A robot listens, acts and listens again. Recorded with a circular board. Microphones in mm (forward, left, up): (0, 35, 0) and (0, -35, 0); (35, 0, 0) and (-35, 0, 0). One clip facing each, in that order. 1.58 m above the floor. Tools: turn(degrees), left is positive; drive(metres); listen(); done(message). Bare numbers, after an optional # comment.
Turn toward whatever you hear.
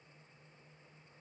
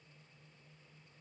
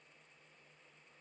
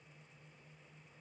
listen()
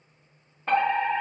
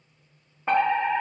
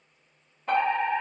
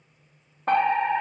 # The fire alarm: 165° right.
turn(-165)
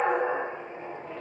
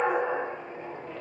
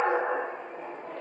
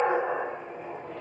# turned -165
# The fire alarm is now 20° left.
turn(20)
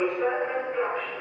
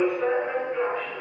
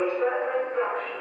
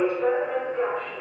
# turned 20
done("Facing the fire alarm, 2 to 4 m away.")